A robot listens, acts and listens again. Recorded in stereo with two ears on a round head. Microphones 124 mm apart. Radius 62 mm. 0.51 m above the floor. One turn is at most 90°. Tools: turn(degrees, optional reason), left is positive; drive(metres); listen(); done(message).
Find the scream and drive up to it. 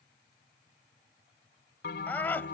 turn(degrees=30)
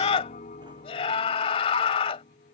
turn(degrees=90, reason="So it is at 135° left.")
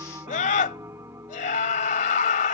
turn(degrees=60, reason="The scream is now 60° left.")
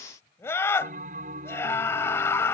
turn(degrees=20, reason="The scream is now 20° left.")
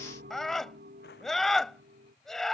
drive(metres=1.0)
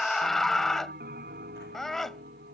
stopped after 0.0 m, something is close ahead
done("Blocked. The scream is further on, straight ahead.")